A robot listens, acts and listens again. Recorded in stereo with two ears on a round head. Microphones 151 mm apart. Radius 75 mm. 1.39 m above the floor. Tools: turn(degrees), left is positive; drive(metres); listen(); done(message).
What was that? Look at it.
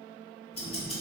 turn(degrees=35)
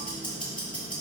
done("Found it: ticking, straight ahead, 1 to 2 m away.")